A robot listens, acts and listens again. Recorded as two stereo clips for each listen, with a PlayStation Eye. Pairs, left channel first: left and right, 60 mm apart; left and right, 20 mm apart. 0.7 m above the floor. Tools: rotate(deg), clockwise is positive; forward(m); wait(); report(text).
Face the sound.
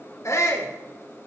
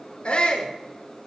rotate(-55)
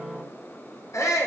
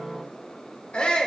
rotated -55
rotate(-60)
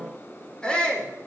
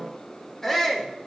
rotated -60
rotate(-15)
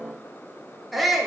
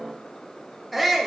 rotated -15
report("Found it: a shout, straight ahead.")